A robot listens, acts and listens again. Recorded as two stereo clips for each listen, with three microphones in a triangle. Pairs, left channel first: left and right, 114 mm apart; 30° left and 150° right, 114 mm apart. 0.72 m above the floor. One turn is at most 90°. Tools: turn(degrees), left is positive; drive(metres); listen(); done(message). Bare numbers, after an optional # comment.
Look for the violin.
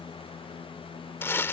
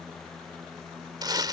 listen()
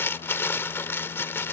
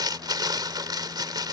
listen()
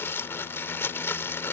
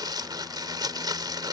done("I can't make out a violin to turn to.")